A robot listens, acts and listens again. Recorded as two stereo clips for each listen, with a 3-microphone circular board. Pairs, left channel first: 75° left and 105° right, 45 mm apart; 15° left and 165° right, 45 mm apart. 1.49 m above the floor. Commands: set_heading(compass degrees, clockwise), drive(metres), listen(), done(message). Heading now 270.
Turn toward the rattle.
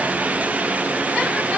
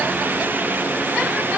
listen()
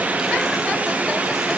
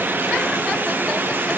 listen()
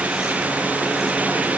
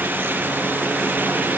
done("I can't make out a rattle to turn to.")